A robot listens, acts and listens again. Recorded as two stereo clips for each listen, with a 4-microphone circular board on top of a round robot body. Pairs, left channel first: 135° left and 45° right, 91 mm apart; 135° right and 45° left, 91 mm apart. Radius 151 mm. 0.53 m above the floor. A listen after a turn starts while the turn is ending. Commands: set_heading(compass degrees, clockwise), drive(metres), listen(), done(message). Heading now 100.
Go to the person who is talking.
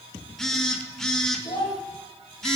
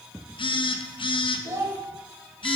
set_heading(355)
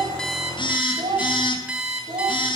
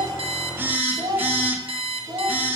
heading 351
drive(1.0)
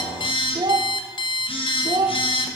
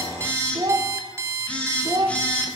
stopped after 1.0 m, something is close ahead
done("Arrived at the child speaking, straight ahead.")